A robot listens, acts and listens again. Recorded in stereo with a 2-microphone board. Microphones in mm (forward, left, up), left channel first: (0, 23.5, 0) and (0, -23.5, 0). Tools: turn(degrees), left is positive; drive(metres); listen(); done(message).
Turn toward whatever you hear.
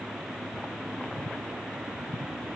listen()
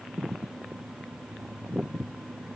listen()
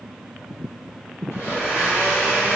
turn(degrees=65)
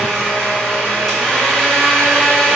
done("Facing the blender.")